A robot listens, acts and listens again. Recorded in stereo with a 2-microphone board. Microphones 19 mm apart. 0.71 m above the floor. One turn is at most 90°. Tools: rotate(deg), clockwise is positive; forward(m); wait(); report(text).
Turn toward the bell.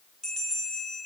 rotate(-35)
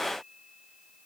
wait()
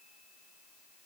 wait()
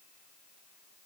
report("I heard a bell, but can't make it out now. It was about straight ahead or 110° left.")